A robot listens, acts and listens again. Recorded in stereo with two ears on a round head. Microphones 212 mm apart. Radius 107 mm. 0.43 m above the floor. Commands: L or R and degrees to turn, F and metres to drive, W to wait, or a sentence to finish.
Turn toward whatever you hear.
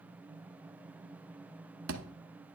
R55
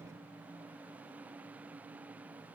W
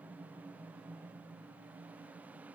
I heard a thud, but can't make it out now. It was about straight ahead or 70° right.